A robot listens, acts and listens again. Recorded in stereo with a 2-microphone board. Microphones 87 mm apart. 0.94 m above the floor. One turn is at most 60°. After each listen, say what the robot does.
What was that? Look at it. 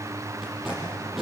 Turn 30° right.
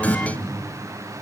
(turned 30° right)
Turn 25° left.
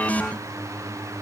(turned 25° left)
Keep listening.
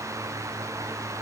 Keep listening.
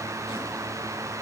Facing where the tape being pulled came from. I can't hear it now.